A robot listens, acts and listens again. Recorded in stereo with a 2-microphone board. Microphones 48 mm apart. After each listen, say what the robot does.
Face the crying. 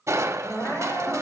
Turn 60° left.
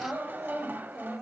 Facing the crying, over 4 m away.